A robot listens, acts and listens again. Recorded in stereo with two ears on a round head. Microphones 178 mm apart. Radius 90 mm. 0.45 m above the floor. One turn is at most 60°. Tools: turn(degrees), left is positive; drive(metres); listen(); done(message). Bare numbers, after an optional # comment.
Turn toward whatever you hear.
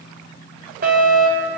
# The fire alarm: about 45° right or 135° right.
turn(-45)
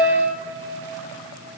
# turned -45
done("Facing the fire alarm.")